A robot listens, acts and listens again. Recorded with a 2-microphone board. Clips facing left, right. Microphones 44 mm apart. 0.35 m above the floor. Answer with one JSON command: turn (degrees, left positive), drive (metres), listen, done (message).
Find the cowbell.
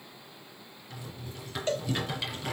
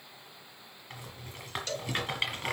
{"turn": 25}
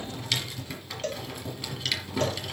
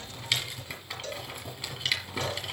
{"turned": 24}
{"turn": 125}
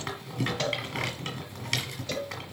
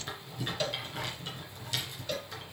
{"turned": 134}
{"turn": -10}
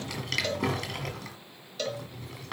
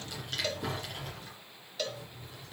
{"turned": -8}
{"done": "Facing the cowbell."}